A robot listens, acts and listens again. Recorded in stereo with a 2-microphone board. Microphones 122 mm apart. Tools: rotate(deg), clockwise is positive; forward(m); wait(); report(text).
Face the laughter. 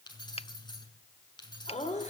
rotate(-70)
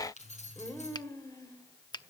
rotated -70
rotate(-30)
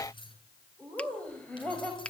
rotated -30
rotate(-15)
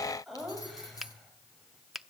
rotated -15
report("Found it: laughter, straight ahead, over 4 m away.")